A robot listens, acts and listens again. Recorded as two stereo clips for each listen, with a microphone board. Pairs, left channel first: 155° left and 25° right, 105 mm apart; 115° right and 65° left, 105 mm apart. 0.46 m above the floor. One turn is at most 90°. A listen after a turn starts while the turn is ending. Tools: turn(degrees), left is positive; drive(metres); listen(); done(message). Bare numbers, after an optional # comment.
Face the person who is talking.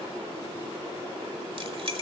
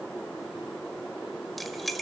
listen()
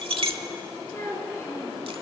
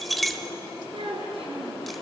# The child speaking: 95° left.
turn(90)
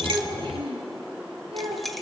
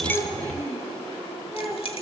done("Found it: a child speaking, straight ahead.")